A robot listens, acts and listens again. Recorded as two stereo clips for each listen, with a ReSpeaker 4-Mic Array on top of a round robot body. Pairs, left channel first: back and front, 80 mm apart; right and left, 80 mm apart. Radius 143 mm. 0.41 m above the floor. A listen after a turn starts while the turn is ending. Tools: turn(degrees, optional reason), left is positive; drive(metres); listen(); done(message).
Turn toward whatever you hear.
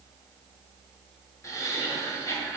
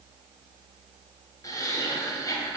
turn(degrees=-130, reason="The laughter: 130° right.")
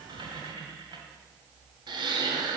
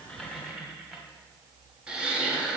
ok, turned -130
turn(degrees=10, reason="The laughter is now 10° left.")
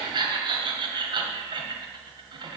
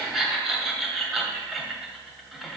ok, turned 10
done("Found it: laughter, straight ahead, 1 to 2 m away.")